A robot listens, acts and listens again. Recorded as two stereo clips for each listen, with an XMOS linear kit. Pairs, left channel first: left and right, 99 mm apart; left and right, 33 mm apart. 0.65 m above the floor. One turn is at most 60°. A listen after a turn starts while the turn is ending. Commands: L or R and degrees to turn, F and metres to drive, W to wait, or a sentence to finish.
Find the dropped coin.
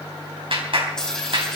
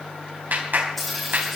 L30
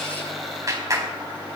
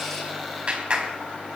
W
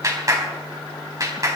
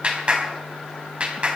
I heard a dropped coin, but can't make it out now. It was about 25° right or 145° left.